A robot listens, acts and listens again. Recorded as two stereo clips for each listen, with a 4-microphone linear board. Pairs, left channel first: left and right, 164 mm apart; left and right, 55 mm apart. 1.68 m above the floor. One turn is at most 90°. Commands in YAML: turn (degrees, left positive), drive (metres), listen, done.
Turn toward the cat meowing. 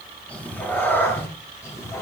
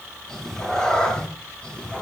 turn: 15
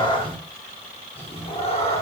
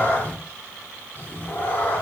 turn: 35
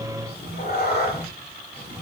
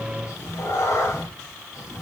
turn: 90
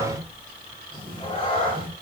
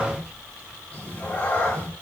turn: 30
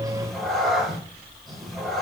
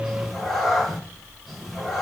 done: "Facing the cat meowing."